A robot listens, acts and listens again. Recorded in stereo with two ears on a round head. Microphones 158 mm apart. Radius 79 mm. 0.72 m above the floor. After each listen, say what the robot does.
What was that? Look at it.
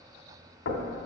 Turn 90° left.
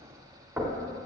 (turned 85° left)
Turn 10° right.
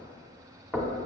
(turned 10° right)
Found it: knocking, straight ahead, 1 to 2 m away.